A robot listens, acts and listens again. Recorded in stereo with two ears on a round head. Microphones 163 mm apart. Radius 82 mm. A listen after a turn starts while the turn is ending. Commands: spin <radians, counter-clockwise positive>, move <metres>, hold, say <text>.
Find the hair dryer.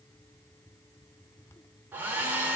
spin -0.52
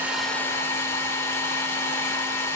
spin 0.35
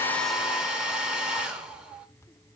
say Found it: a hair dryer, straight ahead, under 1 m away.